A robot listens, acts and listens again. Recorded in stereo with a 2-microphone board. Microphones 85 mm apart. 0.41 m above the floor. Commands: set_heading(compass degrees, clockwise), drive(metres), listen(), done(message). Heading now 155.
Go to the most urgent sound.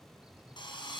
listen()
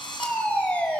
set_heading(140)
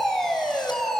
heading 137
drive(1.0)
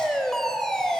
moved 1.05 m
drive(1.0)
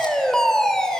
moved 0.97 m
set_heading(122)
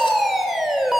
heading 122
drive(1.0)
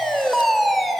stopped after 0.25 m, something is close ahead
done("Arrived at the fire alarm, straight ahead.")